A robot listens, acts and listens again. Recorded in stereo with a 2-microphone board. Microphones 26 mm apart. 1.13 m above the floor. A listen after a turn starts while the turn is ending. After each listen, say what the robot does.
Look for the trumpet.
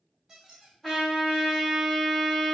Turn 30° left.
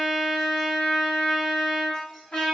Turn 135° left.
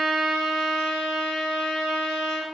Turn 15° right.
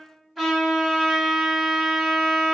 Found it: a trumpet, straight ahead, 1 to 2 m away.